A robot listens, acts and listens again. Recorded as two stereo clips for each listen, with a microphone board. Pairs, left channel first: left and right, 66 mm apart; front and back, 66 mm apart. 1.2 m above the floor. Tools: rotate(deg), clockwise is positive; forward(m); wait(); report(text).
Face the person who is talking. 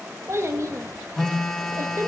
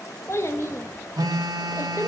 rotate(45)
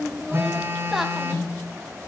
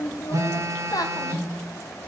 report("Facing the child speaking.")